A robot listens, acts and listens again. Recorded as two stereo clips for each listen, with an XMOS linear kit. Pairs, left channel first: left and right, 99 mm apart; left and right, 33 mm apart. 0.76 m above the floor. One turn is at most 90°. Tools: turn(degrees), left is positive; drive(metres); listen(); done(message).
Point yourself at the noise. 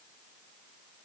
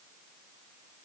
listen()
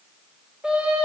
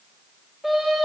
turn(degrees=-30)
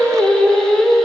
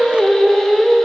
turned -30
done("Facing the singing, 1 to 2 m away.")